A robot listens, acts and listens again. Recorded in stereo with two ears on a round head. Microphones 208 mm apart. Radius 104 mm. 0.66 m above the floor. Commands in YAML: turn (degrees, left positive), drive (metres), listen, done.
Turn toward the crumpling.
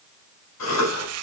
turn: -90
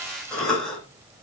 listen: true
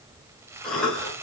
turn: -10
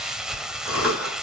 done: "Found it: crumpling, straight ahead."